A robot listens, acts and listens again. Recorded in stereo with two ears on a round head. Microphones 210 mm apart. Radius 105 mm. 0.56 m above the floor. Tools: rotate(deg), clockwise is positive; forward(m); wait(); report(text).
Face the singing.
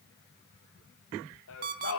rotate(-65)
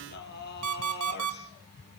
rotate(-45)
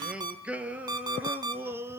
rotate(10)
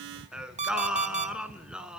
report("Facing the singing, 1 to 2 m away.")